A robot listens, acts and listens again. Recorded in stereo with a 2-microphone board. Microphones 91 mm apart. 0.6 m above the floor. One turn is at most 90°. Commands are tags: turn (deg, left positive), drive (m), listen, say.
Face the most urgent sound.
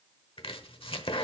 <listen/>
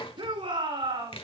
<turn deg="-70"/>
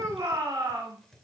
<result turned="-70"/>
<turn deg="-35"/>
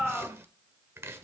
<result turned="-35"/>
<say>Facing the shout, over 4 m away.</say>